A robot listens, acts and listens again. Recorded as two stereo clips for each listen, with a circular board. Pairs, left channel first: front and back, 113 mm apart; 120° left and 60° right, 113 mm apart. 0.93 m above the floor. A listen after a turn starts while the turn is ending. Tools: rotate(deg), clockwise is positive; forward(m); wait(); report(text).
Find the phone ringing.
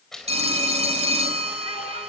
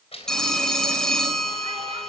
rotate(155)
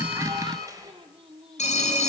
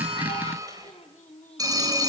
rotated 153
report("Found it: a phone ringing, straight ahead, 2 to 4 m away.")